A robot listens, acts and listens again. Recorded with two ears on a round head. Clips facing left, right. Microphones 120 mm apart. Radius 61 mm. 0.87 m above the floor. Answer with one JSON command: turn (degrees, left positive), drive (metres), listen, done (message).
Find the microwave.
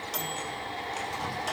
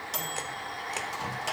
{"turn": -30}
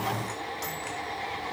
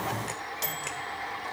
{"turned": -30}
{"turn": -145}
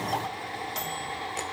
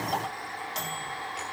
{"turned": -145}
{"done": "Facing the microwave, 1 to 2 m away."}